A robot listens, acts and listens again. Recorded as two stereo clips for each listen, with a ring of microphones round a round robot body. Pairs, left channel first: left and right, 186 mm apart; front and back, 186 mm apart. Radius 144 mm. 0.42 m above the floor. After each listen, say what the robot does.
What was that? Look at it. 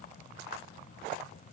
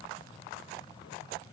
Keep listening.
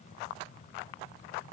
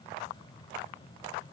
Keep listening.
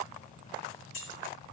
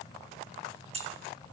Turn 125° left.
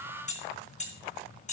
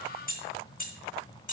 Turn 40° left.
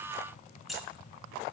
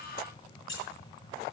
Found it: keys jangling, straight ahead.